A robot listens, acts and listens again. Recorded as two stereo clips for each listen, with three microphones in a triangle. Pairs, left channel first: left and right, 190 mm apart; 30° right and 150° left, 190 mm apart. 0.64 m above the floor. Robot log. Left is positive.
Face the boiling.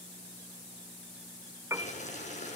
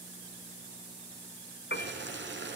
note: The boiling: 140° left.
cmd yaw +140
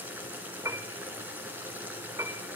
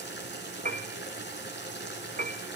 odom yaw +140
note: The boiling is now 10° right.
cmd yaw -10
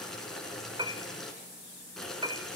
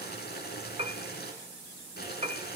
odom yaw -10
end: Found it: boiling, straight ahead, 2 to 4 m away.